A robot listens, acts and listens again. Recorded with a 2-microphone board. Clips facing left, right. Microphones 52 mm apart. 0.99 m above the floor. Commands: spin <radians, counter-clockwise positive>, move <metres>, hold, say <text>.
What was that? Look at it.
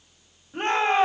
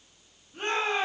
spin 0.87
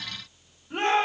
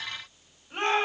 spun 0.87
say Found it: a shout, straight ahead, over 4 m away.